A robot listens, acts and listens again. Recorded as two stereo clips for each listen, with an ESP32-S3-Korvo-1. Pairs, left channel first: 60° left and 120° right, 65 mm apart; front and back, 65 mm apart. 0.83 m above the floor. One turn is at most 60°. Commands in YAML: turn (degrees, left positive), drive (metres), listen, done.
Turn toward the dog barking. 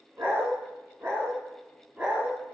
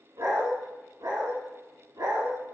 turn: 60
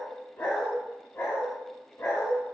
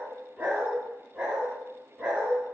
turn: 60
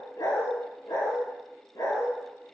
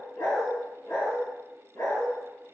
turn: 40
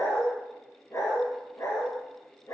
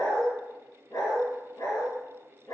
turn: 25
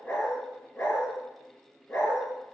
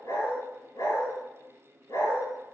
done: "Facing the dog barking."